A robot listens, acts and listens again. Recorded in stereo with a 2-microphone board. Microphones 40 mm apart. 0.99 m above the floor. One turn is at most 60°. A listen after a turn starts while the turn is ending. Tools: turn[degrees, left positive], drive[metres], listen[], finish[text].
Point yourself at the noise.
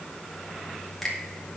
Action: turn[30]
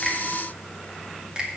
Thought: So it is at 25° right.
Action: turn[-25]
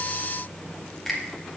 Action: finish[Found it: a finger snap, straight ahead.]